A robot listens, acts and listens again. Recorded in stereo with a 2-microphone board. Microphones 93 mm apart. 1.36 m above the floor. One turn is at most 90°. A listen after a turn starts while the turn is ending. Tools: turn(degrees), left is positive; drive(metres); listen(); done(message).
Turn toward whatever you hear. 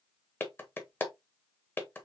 turn(degrees=20)
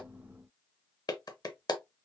turn(degrees=90)
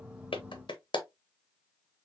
turn(degrees=60)
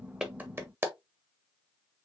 turn(degrees=-25)
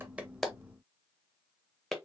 done("Facing the clap.")